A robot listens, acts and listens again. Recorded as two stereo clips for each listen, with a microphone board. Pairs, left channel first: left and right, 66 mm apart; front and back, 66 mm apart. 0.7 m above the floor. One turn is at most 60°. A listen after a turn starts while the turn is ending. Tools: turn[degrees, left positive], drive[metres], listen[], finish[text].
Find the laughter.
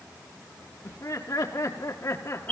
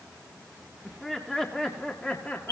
Thought: The laughter: 60° left.
Action: turn[60]
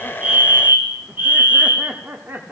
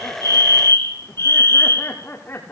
Thought: The laughter is now 45° right.
Action: turn[-45]
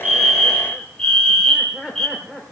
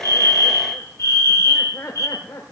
Thought: The laughter is now 15° right.
Action: turn[-15]
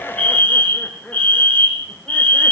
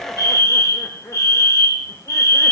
Action: finish[Facing the laughter.]